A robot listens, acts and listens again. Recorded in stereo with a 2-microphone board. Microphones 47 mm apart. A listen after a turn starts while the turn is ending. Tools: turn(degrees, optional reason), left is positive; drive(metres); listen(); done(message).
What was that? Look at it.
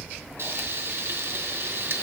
turn(degrees=-60, reason="The frying: about 60° right or 120° right.")
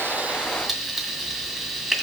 done("Found it: frying, straight ahead, 2 to 4 m away.")